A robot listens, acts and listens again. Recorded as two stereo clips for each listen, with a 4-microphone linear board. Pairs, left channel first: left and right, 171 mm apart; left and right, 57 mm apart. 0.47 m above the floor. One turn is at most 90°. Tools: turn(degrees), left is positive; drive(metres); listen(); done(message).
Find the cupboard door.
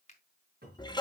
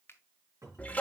turn(degrees=-65)
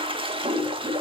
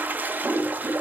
listen()
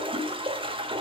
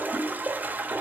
listen()
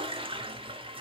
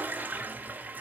done("I heard a cupboard door, but can't make it out now. It was about straight ahead or 50° right.")